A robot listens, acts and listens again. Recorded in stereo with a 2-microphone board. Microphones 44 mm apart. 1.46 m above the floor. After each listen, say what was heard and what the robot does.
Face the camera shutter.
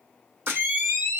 The camera shutter: about 45° right or 135° right. Turn 45° right.
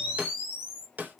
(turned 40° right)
Found it: a camera shutter, straight ahead, 2 to 4 m away.